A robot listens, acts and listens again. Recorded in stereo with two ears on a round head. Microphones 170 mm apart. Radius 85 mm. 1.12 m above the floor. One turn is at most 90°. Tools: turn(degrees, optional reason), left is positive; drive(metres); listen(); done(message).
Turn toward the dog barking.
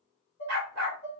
turn(degrees=-60, reason="The dog barking: about 60° right or 120° right.")
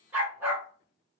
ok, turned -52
turn(degrees=-10, reason="So it is at 10° right.")
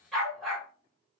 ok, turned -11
done("Found it: a dog barking, straight ahead, 1 to 2 m away.")